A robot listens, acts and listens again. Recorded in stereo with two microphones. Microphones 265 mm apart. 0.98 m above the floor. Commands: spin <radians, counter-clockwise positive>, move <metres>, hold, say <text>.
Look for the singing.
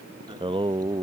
spin -0.35
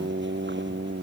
spin -2.44
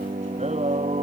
spin -0.44
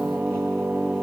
say Found it: singing, straight ahead.